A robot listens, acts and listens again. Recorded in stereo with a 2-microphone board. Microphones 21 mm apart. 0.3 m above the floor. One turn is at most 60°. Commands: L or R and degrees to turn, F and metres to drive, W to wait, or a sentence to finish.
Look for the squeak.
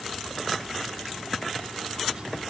W
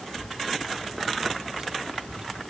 W
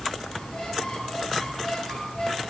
L30
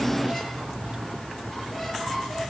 W
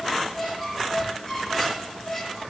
Facing the squeak.